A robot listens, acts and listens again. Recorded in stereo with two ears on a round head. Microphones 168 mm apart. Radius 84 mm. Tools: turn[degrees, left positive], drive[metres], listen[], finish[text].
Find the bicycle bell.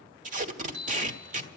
Action: turn[-90]
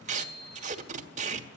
Thought: So it is at 10° left.
Action: turn[10]
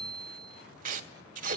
Action: finish[Facing the bicycle bell, 2 to 4 m away.]